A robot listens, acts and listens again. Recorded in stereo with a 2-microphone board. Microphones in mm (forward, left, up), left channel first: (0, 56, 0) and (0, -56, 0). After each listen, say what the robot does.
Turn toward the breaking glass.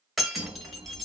Turn 30° left.
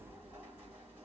Keep listening.
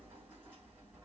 I heard breaking glass, but can't make it out now. It was about 30° right or 150° left.